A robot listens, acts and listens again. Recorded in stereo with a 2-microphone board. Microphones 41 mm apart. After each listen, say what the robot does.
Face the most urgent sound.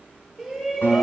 Turn 30° left.
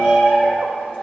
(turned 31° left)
Turn 150° left.
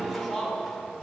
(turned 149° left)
Found it: a shout, straight ahead.